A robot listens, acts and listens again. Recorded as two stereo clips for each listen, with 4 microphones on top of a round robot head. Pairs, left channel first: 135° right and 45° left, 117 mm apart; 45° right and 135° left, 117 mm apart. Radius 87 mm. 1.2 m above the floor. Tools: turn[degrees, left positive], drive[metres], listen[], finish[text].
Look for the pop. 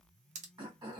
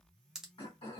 Thought: The pop: 50° left.
Action: turn[50]
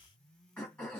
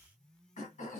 Action: finish[Facing where the pop came from. I can't hear it now.]